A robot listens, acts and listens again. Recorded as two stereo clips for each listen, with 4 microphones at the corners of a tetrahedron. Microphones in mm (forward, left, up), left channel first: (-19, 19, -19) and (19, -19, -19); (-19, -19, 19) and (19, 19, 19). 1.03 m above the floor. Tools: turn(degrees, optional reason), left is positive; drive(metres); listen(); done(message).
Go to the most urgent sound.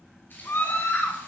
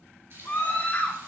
turn(degrees=170, reason="The scream: 170° left.")
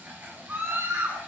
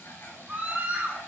turn(degrees=-10, reason="The scream is now 10° right.")
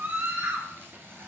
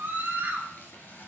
drive(metres=1.0)
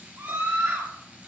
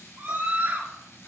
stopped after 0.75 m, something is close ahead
done("Something is in my way. I am facing the scream but have not reached it.")